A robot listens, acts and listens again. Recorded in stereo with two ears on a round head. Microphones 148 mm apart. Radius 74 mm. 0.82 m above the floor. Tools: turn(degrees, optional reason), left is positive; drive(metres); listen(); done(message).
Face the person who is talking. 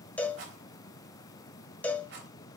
listen()
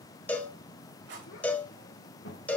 turn(degrees=90)
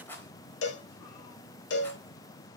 listen()
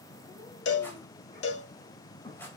turn(degrees=20, reason="The child speaking is now 20° left.")
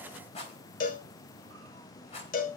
listen()
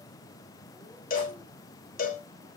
listen()
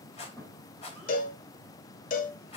done("Found it: a child speaking, straight ahead, 2 to 4 m away.")